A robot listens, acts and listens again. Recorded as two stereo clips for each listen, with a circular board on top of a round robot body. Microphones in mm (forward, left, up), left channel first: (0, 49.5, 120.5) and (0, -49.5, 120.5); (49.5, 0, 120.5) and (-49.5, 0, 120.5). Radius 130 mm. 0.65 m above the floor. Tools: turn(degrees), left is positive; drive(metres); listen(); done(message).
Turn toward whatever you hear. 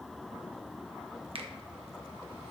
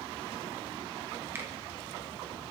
turn(degrees=-115)
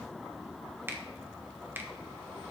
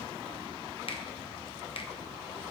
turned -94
turn(degrees=-25)
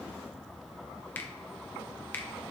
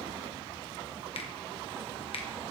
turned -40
turn(degrees=20)
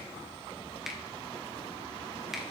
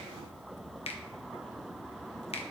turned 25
done("Found it: a finger snap, straight ahead.")